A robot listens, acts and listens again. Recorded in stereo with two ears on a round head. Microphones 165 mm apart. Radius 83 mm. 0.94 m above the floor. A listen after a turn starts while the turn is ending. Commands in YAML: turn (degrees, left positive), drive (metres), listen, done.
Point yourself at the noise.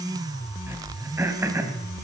turn: -30
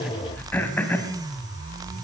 turn: 10
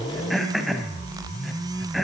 done: "Facing the throat clearing."